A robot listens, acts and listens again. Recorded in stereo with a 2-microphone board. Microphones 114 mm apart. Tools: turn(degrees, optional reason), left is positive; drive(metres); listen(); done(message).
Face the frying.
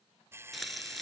turn(degrees=30)
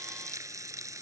turn(degrees=-30, reason="So it is at 30° right.")
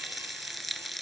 done("Found it: frying, straight ahead.")